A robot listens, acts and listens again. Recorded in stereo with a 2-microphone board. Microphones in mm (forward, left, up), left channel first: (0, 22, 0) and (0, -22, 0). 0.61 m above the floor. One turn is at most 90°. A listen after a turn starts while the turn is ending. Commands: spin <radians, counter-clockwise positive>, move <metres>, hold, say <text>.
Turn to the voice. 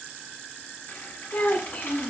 spin 0.87
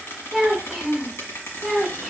say Found it: a child speaking, straight ahead, 1 to 2 m away.